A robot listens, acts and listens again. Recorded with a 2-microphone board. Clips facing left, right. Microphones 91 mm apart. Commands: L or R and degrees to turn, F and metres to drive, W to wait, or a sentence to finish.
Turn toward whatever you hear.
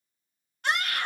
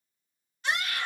L55
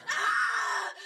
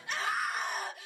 L70
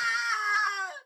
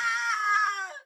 L10
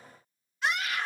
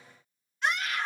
Facing the scream.